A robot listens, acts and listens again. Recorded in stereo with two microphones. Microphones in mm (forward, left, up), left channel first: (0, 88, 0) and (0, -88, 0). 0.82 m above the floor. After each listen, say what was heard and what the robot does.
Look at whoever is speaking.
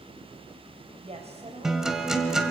The woman speaking: about 35° right or 145° right. Turn 35° right.
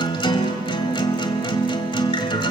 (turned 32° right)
Keep listening.
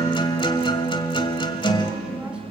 Keep listening.
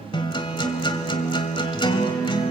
I heard a woman speaking, but can't make it out now. It was about 5° right or 110° right.